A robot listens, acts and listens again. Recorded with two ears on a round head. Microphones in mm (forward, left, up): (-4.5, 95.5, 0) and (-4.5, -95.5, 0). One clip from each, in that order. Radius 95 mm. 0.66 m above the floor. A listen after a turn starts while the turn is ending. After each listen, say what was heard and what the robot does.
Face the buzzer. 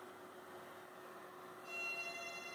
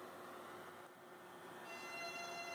Keep listening.
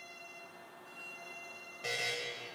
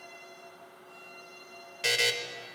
The buzzer: about 75° right or 105° right. Turn 75° right.
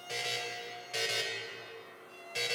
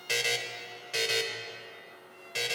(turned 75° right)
So it is at 10° right. Turn 10° right.
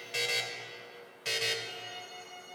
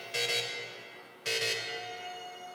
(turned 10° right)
Found it: a buzzer, straight ahead, under 1 m away.